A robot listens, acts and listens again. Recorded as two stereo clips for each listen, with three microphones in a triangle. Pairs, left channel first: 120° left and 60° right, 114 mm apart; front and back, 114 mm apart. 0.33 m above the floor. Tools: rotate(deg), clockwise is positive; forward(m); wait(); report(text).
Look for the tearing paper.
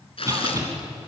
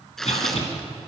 rotate(-85)
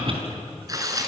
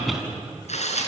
report("Found it: tearing paper, straight ahead.")